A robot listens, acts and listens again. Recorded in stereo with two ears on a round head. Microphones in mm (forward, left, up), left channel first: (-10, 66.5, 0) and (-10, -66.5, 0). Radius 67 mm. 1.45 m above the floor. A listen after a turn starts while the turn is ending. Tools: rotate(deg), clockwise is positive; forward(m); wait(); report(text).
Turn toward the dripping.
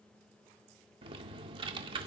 wait()
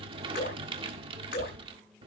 rotate(-90)
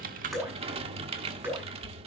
rotate(15)
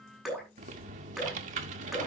report("Found it: dripping, straight ahead, over 4 m away.")